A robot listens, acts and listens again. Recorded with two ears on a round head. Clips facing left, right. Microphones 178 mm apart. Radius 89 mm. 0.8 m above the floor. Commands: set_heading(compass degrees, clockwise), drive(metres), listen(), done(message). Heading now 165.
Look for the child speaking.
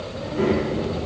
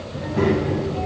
set_heading(240)
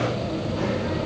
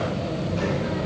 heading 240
set_heading(275)
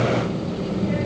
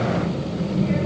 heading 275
set_heading(315)
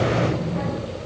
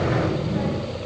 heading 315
done("Found it: a child speaking, straight ahead.")